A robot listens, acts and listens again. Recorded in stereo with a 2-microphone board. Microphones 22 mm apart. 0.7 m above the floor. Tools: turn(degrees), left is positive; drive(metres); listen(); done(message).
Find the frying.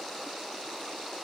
listen()
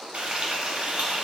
turn(degrees=-65)
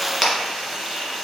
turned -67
done("Facing the frying, 1 to 2 m away.")